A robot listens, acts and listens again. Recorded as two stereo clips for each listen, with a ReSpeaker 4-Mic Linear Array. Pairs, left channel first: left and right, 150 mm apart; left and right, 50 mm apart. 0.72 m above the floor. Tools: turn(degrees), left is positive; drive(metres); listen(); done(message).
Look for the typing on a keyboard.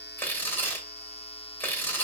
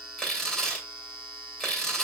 listen()
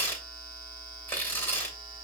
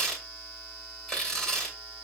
listen()
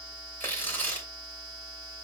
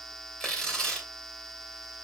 done("I can't make out typing on a keyboard, only tearing paper.")